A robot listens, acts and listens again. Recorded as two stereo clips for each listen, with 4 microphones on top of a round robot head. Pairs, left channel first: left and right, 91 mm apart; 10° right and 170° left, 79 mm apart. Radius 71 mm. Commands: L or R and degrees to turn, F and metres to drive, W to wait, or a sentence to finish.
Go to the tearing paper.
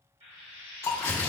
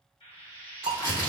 L30
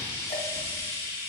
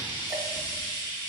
W
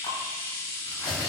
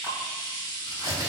F1.0
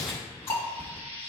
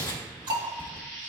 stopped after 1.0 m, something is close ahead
L10
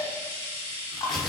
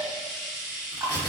I am next to the tearing paper.